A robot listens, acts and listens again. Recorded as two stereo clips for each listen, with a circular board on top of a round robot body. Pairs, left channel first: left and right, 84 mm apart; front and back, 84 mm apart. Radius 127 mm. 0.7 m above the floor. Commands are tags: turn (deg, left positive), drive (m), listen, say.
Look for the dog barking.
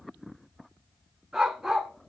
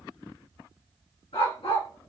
<say>Facing the dog barking.</say>